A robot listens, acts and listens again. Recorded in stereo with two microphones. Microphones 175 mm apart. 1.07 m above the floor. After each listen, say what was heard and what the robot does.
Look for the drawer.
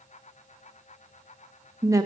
Keep listening.
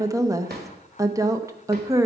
The drawer: about 65° right or 115° right. Turn 65° right.
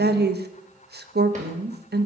Keep listening.
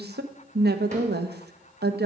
Keep listening.
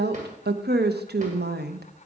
I heard a drawer, but can't make it out now. It was about straight ahead or 50° right.